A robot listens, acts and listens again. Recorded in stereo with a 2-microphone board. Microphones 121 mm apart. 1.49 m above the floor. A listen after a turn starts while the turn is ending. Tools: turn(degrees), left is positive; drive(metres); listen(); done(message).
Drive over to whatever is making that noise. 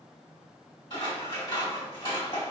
turn(degrees=45)
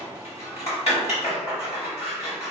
turn(degrees=80)
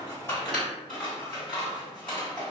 turn(degrees=10)
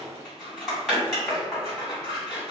drive(metres=1.0)
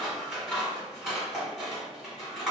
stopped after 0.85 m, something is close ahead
done("I am next to the scissors.")